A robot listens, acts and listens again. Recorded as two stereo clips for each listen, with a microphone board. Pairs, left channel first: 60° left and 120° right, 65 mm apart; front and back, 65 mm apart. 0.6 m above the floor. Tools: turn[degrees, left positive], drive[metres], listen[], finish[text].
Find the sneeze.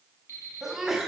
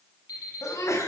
Thought: The sneeze: 35° right.
Action: turn[-35]
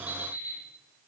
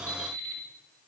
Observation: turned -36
Action: finish[Facing where the sneeze came from. I can't hear it now.]